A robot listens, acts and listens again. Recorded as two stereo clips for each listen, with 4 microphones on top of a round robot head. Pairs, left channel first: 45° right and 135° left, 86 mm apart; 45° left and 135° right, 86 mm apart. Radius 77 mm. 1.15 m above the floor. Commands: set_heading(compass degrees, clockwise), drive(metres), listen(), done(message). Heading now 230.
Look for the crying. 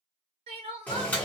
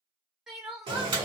set_heading(90)
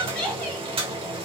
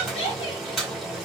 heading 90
set_heading(55)
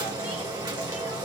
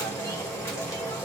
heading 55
listen()
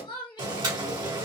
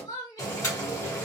done("Found it: crying, straight ahead, under 1 m away.")